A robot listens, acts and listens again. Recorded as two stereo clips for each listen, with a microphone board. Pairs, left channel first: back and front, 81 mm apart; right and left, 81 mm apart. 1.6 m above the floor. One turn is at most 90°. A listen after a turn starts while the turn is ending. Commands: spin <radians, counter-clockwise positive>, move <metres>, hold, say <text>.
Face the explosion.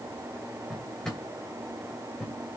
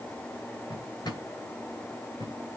hold
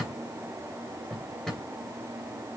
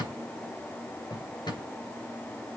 hold
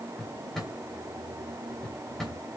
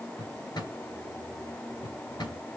say I can't make out an explosion to turn to.